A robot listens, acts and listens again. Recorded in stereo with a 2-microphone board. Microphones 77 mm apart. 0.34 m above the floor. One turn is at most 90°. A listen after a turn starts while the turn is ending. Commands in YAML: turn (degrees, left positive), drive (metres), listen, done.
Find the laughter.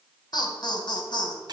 turn: 65
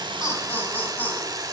turn: 25
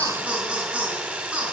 turn: -15
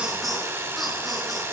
done: "Found it: laughter, straight ahead, 2 to 4 m away."